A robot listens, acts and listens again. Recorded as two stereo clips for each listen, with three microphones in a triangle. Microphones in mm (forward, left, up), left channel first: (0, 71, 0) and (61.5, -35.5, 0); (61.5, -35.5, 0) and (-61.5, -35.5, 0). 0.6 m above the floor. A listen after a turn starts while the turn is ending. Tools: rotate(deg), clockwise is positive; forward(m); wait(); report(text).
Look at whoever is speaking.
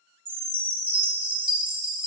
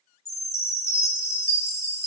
wait()
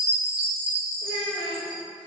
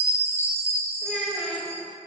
rotate(-100)
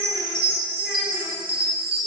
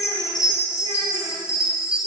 wait()
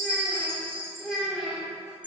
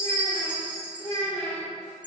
rotate(-35)
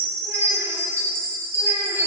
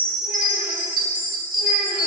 wait()
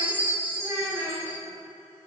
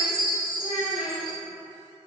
rotate(-10)
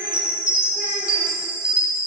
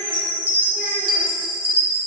wait()
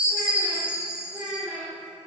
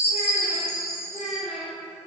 report("Found it: a child speaking, straight ahead, 2 to 4 m away.")